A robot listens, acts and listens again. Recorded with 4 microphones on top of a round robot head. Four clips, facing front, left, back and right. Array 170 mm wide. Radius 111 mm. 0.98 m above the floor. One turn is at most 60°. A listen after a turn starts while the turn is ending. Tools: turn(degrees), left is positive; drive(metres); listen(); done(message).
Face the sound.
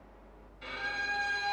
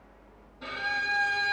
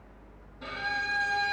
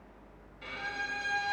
turn(degrees=60)
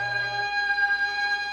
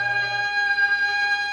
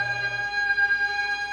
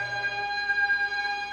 turn(degrees=60)
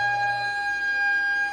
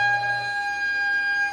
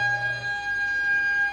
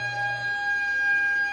turn(degrees=35)
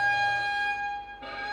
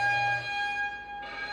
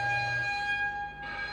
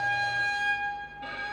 turn(degrees=-10)
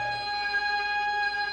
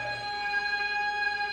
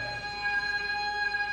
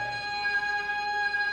done("Found it: a violin, straight ahead, 1 to 2 m away.")